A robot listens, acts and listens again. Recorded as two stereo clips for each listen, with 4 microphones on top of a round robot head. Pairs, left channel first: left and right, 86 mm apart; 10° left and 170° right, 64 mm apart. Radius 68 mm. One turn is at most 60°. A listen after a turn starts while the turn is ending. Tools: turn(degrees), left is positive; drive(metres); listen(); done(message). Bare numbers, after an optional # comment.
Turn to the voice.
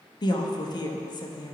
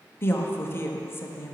# The woman speaking: 60° left.
turn(60)
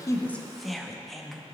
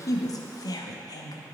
done("Facing the woman speaking.")